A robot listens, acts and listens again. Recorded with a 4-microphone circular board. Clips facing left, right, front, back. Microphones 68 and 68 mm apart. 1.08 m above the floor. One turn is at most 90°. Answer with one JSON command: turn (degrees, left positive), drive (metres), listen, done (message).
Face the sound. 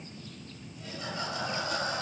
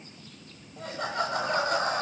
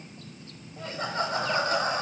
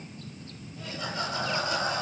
{"turn": -50}
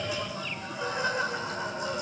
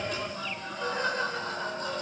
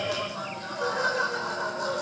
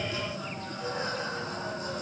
{"turn": 10}
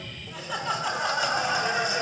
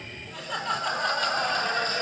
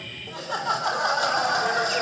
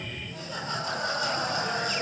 {"turn": 10}
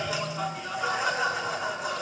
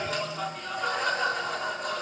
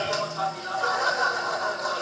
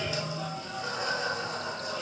{"done": "Found it: laughter, straight ahead."}